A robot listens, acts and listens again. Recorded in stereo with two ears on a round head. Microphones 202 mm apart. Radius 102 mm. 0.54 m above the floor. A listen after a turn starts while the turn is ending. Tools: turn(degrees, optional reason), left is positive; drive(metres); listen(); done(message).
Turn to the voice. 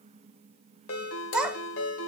turn(degrees=-30)
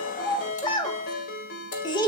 turn(degrees=20, reason="So it is at 20° left.")
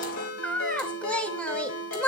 done("Facing the child speaking.")